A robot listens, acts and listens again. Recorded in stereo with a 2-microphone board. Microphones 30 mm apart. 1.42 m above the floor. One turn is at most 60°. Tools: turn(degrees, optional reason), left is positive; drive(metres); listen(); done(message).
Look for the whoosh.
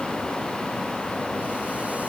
listen()
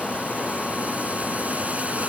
listen()
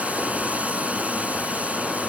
done("I can't make out a whoosh to turn to.")